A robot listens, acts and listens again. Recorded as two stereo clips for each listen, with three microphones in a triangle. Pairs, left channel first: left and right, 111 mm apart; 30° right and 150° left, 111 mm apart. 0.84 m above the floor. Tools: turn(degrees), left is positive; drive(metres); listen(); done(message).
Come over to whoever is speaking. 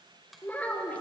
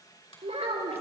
turn(degrees=165)
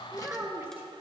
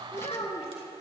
turn(degrees=-20)
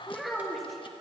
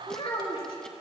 drive(metres=1.0)
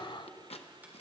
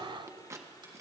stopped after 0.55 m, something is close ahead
listen()
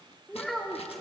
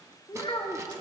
done("Blocked. The child speaking is further on, straight ahead.")